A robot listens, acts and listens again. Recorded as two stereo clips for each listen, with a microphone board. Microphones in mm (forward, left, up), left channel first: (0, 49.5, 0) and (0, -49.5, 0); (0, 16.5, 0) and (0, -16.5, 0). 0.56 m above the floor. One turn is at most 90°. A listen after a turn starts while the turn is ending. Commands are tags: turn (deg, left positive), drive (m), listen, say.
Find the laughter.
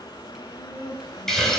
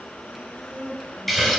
<turn deg="45"/>
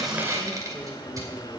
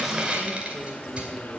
<listen/>
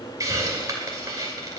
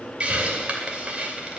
<listen/>
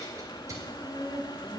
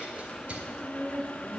<turn deg="-10"/>
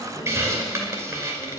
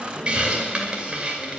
<listen/>
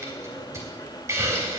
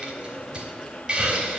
<listen/>
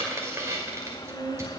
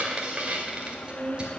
<say>Found it: laughter, straight ahead.</say>